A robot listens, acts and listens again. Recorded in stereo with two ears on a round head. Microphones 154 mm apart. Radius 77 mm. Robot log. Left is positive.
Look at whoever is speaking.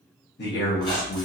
note: The man speaking: about 65° left or 115° left.
cmd yaw +65
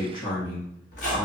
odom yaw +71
note: So it is at 30° left.
cmd yaw +30
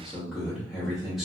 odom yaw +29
end: Found it: a man speaking, straight ahead.